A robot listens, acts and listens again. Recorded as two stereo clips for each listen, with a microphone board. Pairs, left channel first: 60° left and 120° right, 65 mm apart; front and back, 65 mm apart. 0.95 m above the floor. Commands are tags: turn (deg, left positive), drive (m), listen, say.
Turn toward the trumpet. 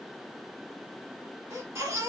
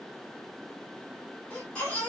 <listen/>
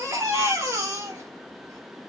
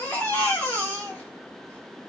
<listen/>
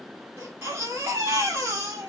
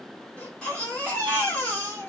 <say>I can't make out a trumpet, only a baby crying.</say>